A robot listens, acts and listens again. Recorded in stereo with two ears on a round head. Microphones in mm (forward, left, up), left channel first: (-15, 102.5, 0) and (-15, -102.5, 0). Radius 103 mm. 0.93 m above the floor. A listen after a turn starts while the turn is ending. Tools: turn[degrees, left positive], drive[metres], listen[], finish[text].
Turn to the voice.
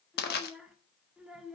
Action: turn[-30]
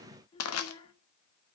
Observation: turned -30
Thought: So it is at 25° left.
Action: turn[25]
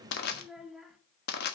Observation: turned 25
Action: finish[Facing the child speaking.]